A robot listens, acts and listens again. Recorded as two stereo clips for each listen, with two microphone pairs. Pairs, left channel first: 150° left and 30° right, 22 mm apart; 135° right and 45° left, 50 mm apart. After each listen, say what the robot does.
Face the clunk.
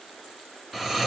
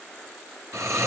Keep listening.
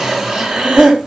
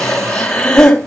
Keep listening.
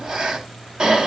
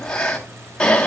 I can't make out a clunk, only breathing and snoring.